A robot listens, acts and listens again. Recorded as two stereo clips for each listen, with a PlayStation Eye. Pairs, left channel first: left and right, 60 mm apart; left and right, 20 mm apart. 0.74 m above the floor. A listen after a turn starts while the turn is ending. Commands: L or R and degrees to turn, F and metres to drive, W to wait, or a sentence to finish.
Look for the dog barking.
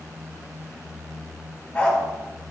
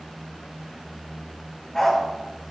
L15
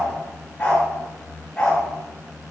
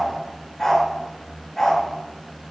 L15
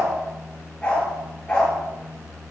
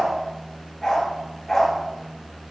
L15
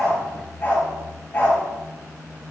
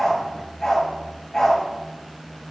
L30
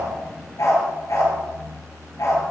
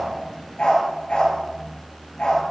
L120
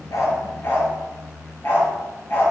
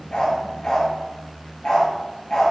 L40
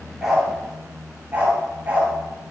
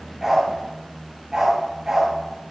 R25
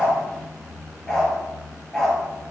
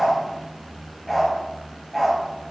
L10
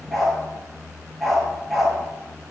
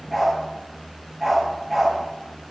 Found it: a dog barking, straight ahead.